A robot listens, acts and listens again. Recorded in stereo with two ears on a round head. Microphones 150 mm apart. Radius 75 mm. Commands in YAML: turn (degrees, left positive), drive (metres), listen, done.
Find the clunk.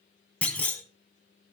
turn: 30
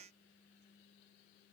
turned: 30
listen: true
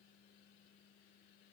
done: "I heard a clunk, but can't make it out now. It was about 20° right or 140° left."